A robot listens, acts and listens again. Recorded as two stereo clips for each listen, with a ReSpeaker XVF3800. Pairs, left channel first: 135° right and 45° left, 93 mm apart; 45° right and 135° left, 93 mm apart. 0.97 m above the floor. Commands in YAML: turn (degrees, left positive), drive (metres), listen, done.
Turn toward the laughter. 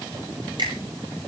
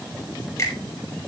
listen: true
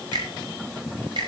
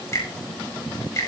listen: true
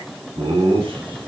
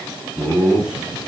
turn: 55
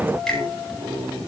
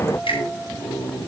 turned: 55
turn: -10
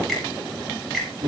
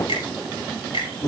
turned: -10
done: "Facing the laughter."